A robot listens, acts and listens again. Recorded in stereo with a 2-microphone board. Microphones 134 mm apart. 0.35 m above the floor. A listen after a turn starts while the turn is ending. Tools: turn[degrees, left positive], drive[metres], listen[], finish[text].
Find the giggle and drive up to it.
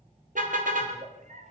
Thought: The giggle: about 65° right or 115° right.
Action: turn[-65]
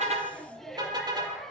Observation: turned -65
Action: drive[1.0]
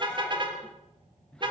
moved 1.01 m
Action: listen[]
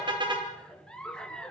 Action: drive[1.0]
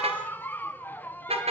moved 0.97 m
Thought: The giggle is now 15° left.
Action: turn[15]
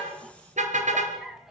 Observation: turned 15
Action: drive[1.0]
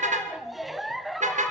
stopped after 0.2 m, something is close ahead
Action: finish[I am next to the giggle.]